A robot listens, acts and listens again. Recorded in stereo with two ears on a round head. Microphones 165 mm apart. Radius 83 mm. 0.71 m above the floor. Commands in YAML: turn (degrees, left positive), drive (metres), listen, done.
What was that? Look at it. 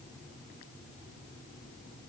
listen: true
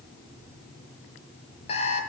turn: 30
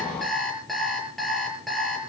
done: "Facing the alarm clock, over 4 m away."